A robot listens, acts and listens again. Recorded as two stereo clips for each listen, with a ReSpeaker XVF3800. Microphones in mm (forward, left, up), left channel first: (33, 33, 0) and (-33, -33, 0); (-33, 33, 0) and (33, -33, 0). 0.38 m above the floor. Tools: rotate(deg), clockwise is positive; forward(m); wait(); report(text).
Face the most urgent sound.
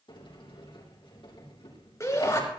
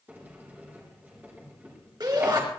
rotate(10)
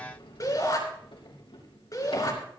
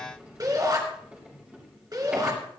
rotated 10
report("Found it: a shout, straight ahead, over 4 m away.")